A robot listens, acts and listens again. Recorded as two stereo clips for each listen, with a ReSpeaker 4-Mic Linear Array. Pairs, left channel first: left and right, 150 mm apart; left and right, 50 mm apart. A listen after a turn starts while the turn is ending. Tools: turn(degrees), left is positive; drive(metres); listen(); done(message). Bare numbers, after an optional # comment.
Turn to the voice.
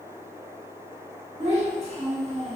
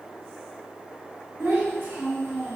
# The child speaking: about 45° right or 135° right.
turn(-45)
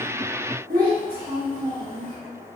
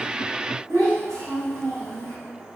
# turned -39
# So it is at 95° right.
turn(-95)
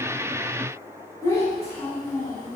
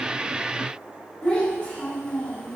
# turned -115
# The child speaking is now 20° left.
turn(20)
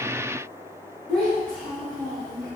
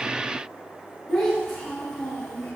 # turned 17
done("Facing the child speaking, 1 to 2 m away.")